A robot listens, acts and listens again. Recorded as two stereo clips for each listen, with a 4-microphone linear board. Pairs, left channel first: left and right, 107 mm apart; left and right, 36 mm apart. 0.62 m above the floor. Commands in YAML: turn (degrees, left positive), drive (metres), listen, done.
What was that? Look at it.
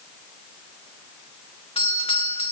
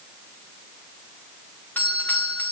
turn: 65
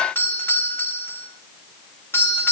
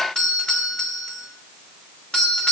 turn: 25
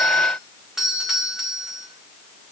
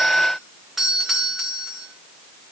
done: "Found it: a doorbell, straight ahead, 2 to 4 m away."